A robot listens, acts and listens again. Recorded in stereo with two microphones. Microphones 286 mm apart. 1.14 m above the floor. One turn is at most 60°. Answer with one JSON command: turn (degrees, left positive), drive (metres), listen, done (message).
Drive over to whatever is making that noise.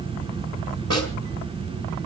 {"turn": -55}
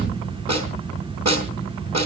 {"turn": -60}
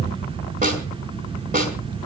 {"turn": -30}
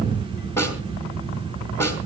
{"turn": 10}
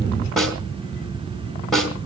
{"drive": 1.0}
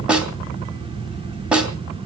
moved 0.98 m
{"drive": 1.0}
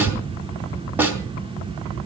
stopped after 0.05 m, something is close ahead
{"done": "Blocked. The snare drum is further on, straight ahead."}